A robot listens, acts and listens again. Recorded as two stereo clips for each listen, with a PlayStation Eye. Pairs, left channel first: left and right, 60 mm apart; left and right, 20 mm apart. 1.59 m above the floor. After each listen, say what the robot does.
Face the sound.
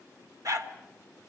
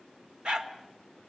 Turn 60° right.
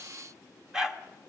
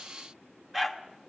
Turn 10° right.
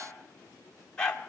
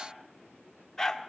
Turn 15° left.
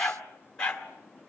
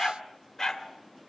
Turn 15° left.
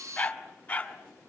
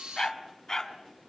Turn 20° left.
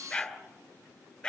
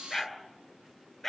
Turn 10° left.
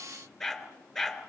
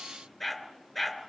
Found it: a dog barking, straight ahead, 2 to 4 m away.